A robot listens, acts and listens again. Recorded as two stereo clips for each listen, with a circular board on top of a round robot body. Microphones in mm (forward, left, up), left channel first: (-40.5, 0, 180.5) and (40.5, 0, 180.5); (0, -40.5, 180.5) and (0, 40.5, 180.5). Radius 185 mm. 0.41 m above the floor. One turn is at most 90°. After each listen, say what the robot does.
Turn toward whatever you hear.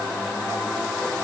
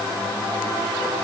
Keep listening.
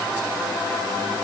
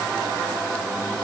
Keep listening.
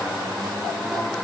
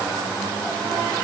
I can't make out anything.